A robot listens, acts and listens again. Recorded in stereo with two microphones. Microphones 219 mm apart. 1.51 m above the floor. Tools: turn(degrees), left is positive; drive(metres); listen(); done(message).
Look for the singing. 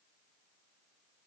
listen()
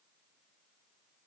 listen()
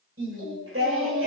turn(degrees=-90)
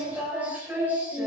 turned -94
turn(degrees=-10)
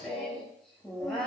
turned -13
done("Found it: singing, straight ahead, over 4 m away.")